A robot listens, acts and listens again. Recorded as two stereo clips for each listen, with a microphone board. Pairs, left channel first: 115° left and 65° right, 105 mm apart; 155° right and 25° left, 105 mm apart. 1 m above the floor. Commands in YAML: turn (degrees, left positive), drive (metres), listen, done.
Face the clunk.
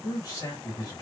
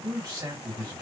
listen: true
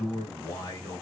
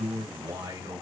listen: true
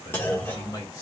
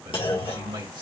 turn: 180
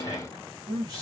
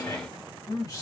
done: "Facing where the clunk came from. I can't hear it now."